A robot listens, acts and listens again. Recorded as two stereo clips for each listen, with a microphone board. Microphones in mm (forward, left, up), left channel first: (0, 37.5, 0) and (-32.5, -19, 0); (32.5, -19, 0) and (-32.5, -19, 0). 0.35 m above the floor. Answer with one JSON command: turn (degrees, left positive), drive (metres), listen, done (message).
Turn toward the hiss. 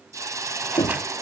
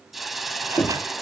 {"turn": -90}
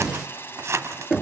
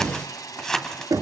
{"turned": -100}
{"turn": 10}
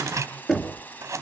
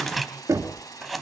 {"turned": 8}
{"done": "Found it: a hiss, straight ahead, 1 to 2 m away."}